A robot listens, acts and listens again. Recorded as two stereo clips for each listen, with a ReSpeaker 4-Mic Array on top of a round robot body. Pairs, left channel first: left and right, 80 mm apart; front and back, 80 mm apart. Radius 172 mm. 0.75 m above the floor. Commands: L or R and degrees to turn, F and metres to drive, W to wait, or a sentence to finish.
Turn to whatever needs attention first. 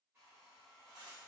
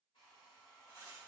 W
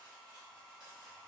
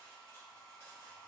W
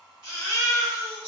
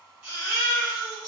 R115
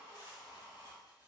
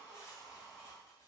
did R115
W
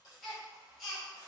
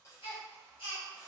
Found it: a baby crying, straight ahead.